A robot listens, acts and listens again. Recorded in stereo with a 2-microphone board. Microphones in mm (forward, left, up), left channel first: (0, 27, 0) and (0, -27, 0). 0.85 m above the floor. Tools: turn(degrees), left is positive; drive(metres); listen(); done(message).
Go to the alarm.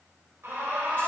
turn(degrees=-60)
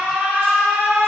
turn(degrees=-35)
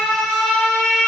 drive(metres=1.0)
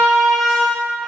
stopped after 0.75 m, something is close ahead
done("I am next to the alarm.")